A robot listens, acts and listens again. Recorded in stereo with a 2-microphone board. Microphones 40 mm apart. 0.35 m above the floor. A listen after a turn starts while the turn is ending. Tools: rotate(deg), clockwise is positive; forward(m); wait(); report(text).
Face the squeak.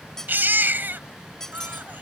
rotate(-30)
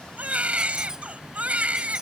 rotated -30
wait()
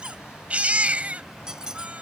rotate(20)
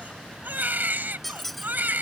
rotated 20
report("Found it: a squeak, straight ahead.")